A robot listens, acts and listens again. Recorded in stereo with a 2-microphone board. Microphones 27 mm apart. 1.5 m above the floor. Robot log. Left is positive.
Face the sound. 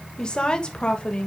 note: The woman speaking: about 40° left or 140° left.
cmd yaw +40
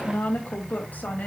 note: So it is at 95° left.
cmd yaw +95
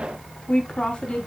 note: The woman speaking is now 35° left.
cmd yaw +35
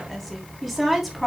end: Facing the woman speaking, over 4 m away.